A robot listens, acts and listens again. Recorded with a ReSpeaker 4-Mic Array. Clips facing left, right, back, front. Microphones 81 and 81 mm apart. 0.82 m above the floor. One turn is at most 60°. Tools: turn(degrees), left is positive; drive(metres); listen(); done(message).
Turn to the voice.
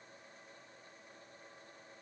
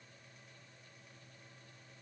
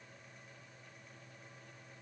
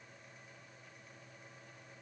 listen()
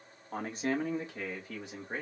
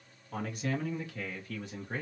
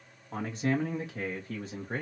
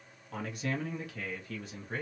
turn(degrees=60)
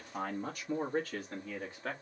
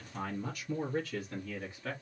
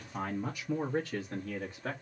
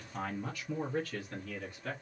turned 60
turn(degrees=60)
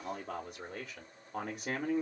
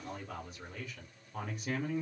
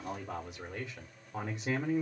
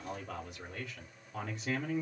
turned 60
turn(degrees=60)
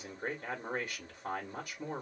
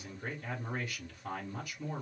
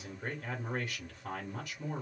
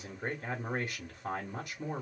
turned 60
turn(degrees=50)
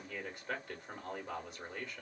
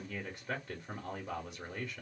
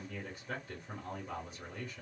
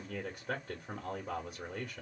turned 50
done("Facing the man speaking.")